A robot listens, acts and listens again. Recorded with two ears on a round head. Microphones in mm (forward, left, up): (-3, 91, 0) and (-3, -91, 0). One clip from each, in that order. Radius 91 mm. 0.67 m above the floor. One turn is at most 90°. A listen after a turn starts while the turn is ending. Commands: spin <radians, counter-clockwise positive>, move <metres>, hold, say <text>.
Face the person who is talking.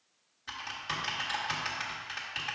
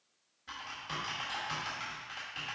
hold
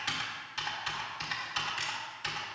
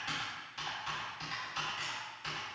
hold
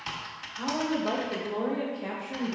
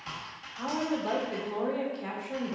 spin -0.70
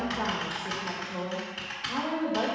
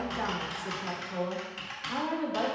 spin -1.57
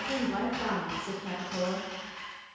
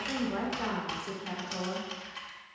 say Facing the woman speaking, 1 to 2 m away.